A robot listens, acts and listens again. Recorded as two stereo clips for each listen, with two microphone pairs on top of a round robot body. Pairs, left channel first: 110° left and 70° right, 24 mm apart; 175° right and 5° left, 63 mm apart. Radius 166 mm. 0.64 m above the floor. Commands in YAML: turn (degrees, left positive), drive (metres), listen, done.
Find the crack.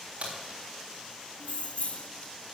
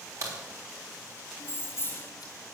turn: -30
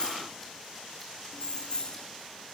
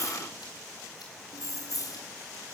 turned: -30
done: "I heard a crack from this way, but can't make it out now."